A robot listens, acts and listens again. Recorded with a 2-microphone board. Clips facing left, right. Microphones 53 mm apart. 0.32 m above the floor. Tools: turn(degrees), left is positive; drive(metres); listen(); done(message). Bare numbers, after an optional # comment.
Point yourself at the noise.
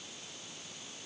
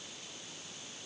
listen()
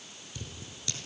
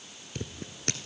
# The scissors: about 50° right or 130° right.
turn(-50)
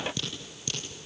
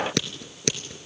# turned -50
# So it is at 75° right.
turn(-75)
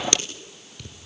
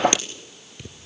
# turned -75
# The scissors is now 20° right.
turn(-20)
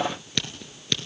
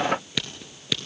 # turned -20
done("Found it: scissors, straight ahead, 2 to 4 m away.")